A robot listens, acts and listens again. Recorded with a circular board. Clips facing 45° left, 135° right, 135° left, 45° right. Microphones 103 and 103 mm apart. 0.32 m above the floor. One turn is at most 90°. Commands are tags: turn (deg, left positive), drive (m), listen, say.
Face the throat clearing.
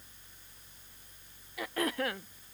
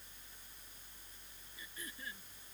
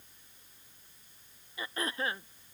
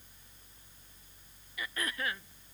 <turn deg="70"/>
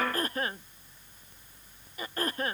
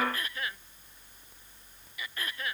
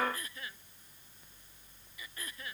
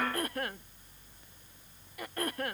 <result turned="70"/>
<say>Facing the throat clearing.</say>